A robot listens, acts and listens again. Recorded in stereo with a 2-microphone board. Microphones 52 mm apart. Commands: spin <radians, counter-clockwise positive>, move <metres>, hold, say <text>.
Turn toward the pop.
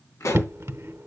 spin 1.31
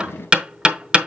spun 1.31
hold
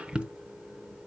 say I heard a pop, but can't make it out now. It was about straight ahead or 30° left.